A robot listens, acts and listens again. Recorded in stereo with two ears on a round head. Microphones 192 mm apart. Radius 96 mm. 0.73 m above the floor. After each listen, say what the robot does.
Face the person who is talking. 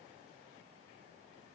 Keep listening.
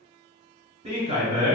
Turn 30° right.
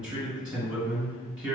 Found it: a man speaking, straight ahead.